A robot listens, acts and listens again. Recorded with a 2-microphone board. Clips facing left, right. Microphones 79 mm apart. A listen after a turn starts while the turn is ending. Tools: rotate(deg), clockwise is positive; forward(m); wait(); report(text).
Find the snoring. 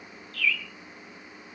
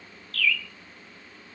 wait()
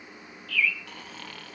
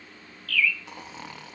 rotate(20)
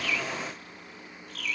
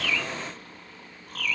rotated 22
wait()
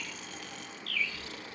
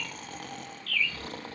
rotate(135)
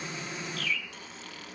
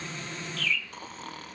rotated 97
rotate(40)
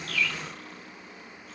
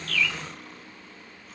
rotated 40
report("Found it: snoring, straight ahead.")